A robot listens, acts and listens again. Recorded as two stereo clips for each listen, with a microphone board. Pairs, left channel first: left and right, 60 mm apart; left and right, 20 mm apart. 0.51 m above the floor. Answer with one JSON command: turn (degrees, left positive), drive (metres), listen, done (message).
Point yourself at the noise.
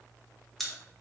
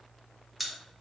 {"turn": 30}
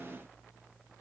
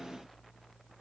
{"listen": true}
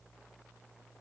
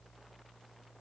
{"done": "I heard a pop, but can't make it out now. It was about 25° right or 145° left."}